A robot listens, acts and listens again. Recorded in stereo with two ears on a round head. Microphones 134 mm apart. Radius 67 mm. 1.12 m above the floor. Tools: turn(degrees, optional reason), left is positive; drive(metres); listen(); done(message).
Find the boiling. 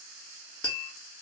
listen()
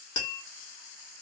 listen()
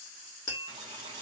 turn(degrees=-30, reason="The boiling: about 30° right or 150° right.")
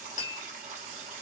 turn(degrees=-120, reason="So it is at 120° right.")
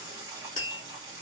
turn(degrees=-30, reason="The boiling is now 30° right.")
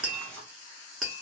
turn(degrees=10, reason="The boiling is now 10° left.")
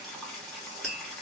done("Facing the boiling.")